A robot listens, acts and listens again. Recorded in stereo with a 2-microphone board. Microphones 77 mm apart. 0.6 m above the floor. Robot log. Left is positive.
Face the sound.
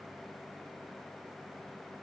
cmd idle
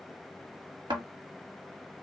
note: The thud: about 70° right or 110° right.
cmd yaw -70
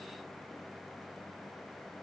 cmd idle
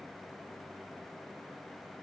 end: I heard a thud, but can't make it out now. It was about straight ahead or 40° right.